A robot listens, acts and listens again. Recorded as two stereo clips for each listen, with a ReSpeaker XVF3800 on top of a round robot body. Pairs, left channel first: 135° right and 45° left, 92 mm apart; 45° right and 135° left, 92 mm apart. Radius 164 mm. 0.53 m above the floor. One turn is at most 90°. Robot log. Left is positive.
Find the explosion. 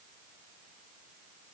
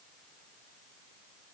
cmd idle
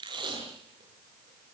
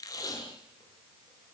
cmd idle
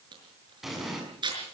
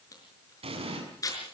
note: The explosion: 130° left.
cmd yaw +90
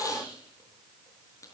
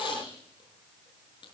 note: Nothing new. It was at 40° left.
cmd yaw +40
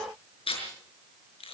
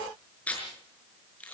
end: I heard an explosion from this way, but can't make it out now.